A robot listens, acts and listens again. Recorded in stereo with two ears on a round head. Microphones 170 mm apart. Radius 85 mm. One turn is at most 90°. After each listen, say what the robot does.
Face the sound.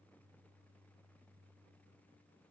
Keep listening.
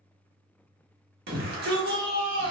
Turn 55° right.
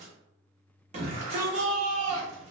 Turn 45° right.
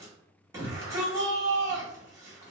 Turn 20° right.
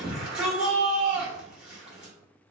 Found it: a shout, straight ahead.